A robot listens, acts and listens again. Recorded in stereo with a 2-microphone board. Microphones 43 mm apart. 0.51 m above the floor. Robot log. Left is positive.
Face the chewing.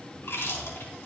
note: The chewing: about 60° left or 120° left.
cmd yaw +60
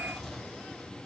end: Facing the chewing.